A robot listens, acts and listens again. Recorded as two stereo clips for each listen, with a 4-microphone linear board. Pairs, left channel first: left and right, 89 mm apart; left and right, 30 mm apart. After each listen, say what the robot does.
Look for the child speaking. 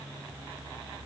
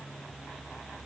Keep listening.
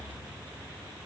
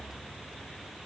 Keep listening.
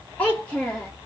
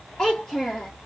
Turn 30° left.
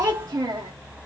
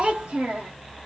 Turn 40° right.
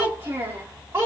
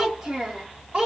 Turn 30° right.
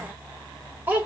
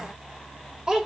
Turn 25° right.
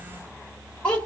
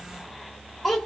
Turn 10° left.
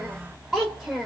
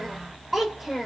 Facing the child speaking.